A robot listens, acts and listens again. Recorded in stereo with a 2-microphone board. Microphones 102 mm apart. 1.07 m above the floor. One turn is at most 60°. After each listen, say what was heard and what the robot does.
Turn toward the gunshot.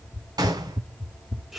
The gunshot: about 40° right or 140° right. Turn 40° right.
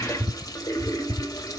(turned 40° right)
Keep listening.
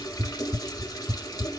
I heard a gunshot, but can't make it out now. It was about straight ahead or 100° right.